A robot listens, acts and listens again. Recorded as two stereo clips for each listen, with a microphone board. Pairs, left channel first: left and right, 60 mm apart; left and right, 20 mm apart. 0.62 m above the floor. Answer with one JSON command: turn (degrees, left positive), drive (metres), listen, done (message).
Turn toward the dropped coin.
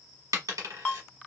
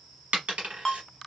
{"turn": -90}
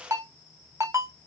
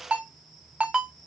{"done": "Facing where the dropped coin came from. I can't hear it now."}